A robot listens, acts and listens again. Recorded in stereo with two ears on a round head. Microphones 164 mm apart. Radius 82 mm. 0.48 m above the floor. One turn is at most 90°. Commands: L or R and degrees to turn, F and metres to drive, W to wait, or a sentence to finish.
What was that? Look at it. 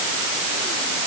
W
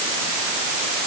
W
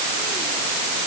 I can't make out anything.